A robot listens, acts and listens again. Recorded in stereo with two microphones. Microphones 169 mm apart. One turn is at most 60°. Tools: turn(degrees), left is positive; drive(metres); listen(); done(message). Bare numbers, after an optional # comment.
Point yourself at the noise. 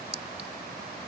# The clink: about 35° right or 145° right.
turn(-35)
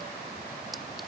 listen()
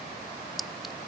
done("Facing the clink.")